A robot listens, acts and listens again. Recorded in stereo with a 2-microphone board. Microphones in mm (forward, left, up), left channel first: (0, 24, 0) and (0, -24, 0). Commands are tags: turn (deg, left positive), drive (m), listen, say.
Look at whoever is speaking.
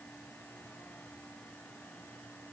<listen/>
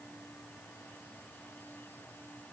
<listen/>
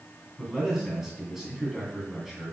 <turn deg="-30"/>
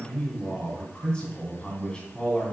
<turn deg="25"/>
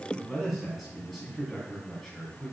<say>Found it: a man speaking, straight ahead, 2 to 4 m away.</say>